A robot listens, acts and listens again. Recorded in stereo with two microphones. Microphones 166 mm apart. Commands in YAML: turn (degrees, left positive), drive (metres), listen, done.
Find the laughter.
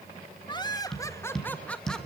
turn: 30
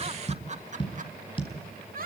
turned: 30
turn: -60
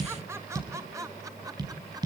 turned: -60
turn: -20
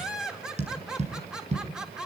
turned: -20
done: "Facing the laughter, 2 to 4 m away."